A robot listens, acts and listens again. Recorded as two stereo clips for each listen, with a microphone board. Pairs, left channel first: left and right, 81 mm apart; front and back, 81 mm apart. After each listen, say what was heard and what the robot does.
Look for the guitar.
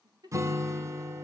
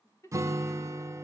The guitar: 135° right. Turn 135° right.
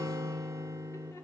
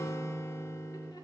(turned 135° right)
The guitar is now 45° right. Turn 45° right.
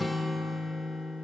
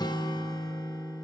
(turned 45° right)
Facing the guitar.